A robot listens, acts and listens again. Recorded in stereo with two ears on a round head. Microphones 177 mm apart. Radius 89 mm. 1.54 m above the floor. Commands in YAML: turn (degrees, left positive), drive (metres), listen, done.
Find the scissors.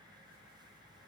listen: true
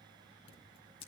turn: 30
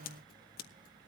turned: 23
turn: 125
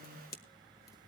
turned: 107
turn: 20
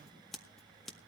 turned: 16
done: "Facing the scissors."